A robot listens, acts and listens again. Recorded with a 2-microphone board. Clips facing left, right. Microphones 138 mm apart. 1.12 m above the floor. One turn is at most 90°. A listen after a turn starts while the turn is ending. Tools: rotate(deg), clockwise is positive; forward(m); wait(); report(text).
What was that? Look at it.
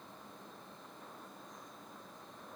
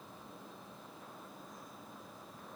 wait()
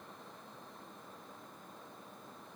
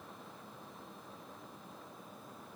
wait()
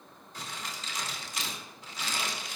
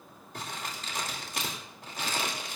rotate(55)
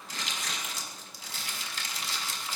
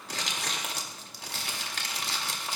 rotate(70)
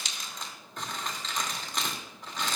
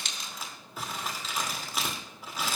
report("Found it: crumpling, straight ahead, 2 to 4 m away.")